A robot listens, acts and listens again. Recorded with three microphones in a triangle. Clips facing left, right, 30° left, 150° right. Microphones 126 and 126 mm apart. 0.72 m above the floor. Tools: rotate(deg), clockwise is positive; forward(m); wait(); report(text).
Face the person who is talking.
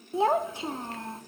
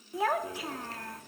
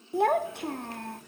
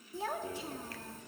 rotate(-30)
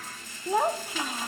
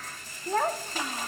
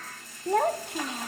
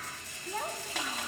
rotate(-10)
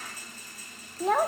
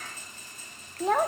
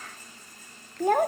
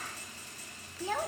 report("Found it: a child speaking, straight ahead.")